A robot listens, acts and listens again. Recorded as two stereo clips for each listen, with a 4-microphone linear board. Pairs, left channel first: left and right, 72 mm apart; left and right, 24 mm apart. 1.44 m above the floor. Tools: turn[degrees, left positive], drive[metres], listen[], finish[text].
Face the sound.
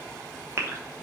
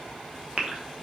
Thought: The gasp: about 40° right or 140° right.
Action: turn[-40]
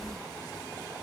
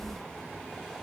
Action: listen[]
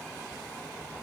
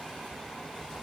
Action: finish[I heard a gasp, but can't make it out now. It was about straight ahead or 100° right.]